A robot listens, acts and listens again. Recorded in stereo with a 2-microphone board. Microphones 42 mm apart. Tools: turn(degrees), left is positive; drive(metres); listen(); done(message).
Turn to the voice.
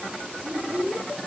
turn(degrees=-65)
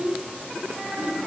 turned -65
turn(degrees=-45)
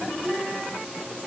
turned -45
turn(degrees=-10)
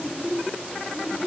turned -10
done("Facing the child speaking.")